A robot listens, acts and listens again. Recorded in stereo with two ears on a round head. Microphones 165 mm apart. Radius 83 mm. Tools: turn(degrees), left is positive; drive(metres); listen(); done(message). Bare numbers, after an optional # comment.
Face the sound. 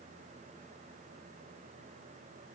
listen()
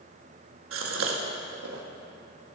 turn(-90)
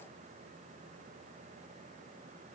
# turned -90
done("I heard a gasp from this way, but can't make it out now.")